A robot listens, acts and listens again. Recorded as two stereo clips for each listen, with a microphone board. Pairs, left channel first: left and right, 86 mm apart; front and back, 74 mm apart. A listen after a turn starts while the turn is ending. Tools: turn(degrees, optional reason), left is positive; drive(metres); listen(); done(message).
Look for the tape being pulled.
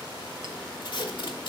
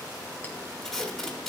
turn(degrees=85, reason="The tape being pulled: 85° left.")
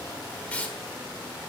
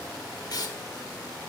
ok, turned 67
turn(degrees=15, reason="The tape being pulled is now 15° left.")
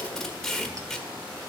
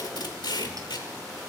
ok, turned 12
done("Found it: tape being pulled, straight ahead.")